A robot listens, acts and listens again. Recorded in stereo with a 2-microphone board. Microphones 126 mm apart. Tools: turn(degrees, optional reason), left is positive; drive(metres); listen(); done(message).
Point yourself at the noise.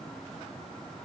listen()
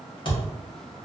turn(degrees=40, reason="The thud: about 40° left or 140° left.")
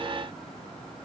listen()
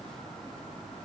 done("I heard a thud, but can't make it out now. It was about straight ahead or 100° left.")